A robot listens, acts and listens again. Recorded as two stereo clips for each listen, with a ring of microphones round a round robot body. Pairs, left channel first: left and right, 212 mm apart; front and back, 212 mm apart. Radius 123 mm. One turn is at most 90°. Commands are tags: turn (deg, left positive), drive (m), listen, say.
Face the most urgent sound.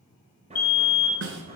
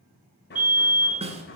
<turn deg="90"/>
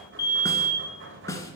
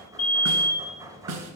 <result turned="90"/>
<turn deg="55"/>
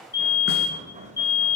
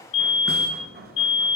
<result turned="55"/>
<turn deg="20"/>
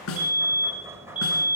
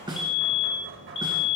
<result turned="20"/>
<say>Facing the fire alarm.</say>